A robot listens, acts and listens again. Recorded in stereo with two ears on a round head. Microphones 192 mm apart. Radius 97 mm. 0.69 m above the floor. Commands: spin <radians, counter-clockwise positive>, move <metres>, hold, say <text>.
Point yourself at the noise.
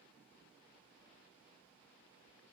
hold
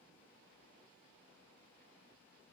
hold
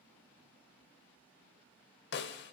spin 0.96
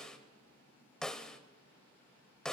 say Facing the snare drum.